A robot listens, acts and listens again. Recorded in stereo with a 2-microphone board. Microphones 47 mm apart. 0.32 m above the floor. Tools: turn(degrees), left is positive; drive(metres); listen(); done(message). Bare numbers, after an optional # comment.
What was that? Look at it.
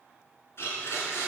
# The blender: about 60° left or 120° left.
turn(60)
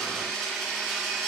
done("Found it: a blender, straight ahead.")